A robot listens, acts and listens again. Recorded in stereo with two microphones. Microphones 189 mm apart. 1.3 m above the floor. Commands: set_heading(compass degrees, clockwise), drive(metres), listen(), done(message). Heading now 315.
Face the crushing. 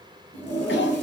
listen()
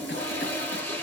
listen()
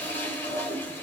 done("I can't make out crushing, only a toilet flushing.")